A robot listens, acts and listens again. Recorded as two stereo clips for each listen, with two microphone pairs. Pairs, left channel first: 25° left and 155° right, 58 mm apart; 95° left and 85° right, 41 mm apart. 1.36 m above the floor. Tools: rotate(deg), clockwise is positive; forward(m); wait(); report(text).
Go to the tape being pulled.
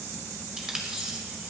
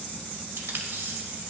rotate(75)
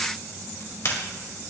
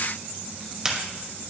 rotate(10)
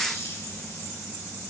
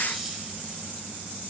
wait()
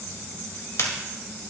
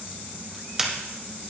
forward(1.0)
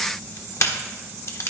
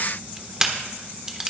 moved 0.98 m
rotate(10)
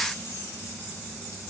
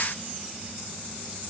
wait()
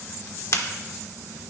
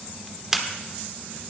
forward(1.0)
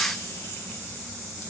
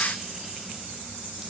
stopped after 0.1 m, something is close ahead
wait()
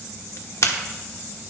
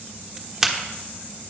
report("Arrived at the tape being pulled, straight ahead.")